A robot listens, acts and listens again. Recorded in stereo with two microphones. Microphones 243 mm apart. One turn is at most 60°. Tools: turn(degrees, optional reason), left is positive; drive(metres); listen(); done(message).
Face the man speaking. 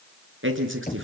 turn(degrees=-55, reason="The man speaking: about 55° right or 125° right.")
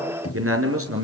turn(degrees=-60, reason="So it is at 65° right.")
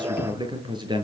turn(degrees=-20, reason="The man speaking is now 20° right.")
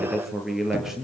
done("Found it: a man speaking, straight ahead.")